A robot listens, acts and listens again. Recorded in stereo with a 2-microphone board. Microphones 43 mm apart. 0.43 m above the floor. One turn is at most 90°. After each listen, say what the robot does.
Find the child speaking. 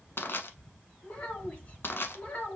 Turn 45° left.
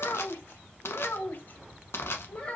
Turn 30° left.
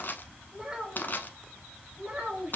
Turn 30° right.
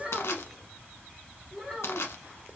Found it: a child speaking, straight ahead, 1 to 2 m away.